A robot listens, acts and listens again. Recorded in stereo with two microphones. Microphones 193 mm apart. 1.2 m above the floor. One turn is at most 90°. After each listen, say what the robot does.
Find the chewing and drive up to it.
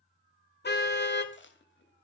Turn 90° left.
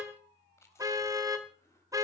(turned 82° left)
Turn 10° left.
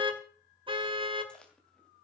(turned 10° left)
Drive 1.0 m forward.
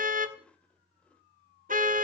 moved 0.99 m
Drive 1.0 m forward.
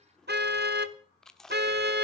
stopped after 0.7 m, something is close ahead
Arrived at the chewing, straight ahead.